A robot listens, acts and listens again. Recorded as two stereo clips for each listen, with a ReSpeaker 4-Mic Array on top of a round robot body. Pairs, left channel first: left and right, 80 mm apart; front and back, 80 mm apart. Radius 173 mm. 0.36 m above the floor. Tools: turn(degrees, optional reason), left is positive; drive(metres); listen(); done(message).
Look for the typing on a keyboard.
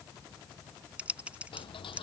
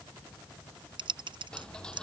turn(degrees=-165, reason="The typing on a keyboard: 165° right.")
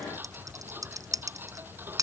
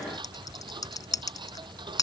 turn(degrees=-45, reason="The typing on a keyboard is now 45° right.")
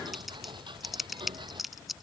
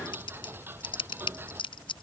done("Found it: typing on a keyboard, straight ahead.")